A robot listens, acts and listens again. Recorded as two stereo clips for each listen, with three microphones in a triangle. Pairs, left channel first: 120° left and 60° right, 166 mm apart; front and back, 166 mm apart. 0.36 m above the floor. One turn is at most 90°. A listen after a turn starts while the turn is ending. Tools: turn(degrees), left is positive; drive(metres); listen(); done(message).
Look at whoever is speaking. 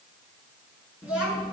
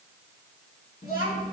turn(degrees=25)
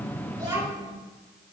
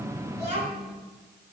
done("Facing the child speaking.")